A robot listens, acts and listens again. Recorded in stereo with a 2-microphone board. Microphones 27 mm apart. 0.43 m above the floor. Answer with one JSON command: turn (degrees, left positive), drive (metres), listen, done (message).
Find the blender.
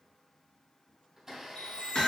{"turn": -30}
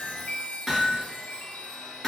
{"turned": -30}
{"listen": true}
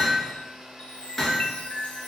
{"turn": -140}
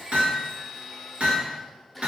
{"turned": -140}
{"turn": -10}
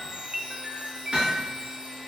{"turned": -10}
{"listen": true}
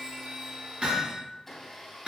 {"done": "Facing the blender, 2 to 4 m away."}